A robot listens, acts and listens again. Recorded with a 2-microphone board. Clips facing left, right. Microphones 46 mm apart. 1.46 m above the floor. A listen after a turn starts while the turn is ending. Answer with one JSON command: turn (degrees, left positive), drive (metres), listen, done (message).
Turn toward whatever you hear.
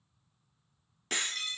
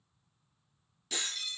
{"turn": 55}
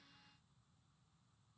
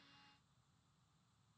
{"listen": true}
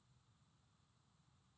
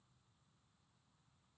{"done": "I heard breaking glass, but can't make it out now. It was about straight ahead or 70° left."}